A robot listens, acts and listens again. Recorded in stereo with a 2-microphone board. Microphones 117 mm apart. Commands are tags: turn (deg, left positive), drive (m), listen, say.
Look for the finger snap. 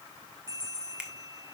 <turn deg="-30"/>
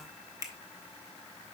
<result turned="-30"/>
<turn deg="-145"/>
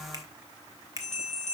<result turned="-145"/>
<turn deg="-35"/>
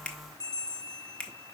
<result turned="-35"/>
<turn deg="10"/>
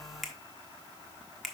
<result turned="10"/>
<say>Found it: a finger snap, straight ahead, 1 to 2 m away.</say>